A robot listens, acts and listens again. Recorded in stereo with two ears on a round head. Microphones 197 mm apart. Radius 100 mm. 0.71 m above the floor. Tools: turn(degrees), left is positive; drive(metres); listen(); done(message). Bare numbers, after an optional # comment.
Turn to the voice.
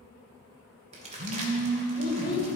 # The child speaking: about 45° left or 135° left.
turn(45)
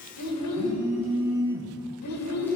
# So it is at 85° left.
turn(85)
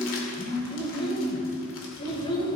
# The child speaking is now 25° left.
turn(25)
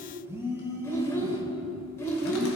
# The child speaking is now 15° left.
turn(15)
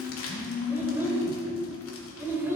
# The child speaking is now 10° right.
turn(-10)
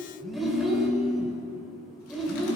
done("Found it: a child speaking, straight ahead.")